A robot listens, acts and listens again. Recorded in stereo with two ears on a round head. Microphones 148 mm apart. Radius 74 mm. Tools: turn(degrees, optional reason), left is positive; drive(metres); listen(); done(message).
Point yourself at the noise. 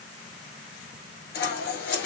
turn(degrees=90)
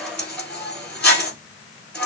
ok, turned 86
done("Found it: scissors, straight ahead.")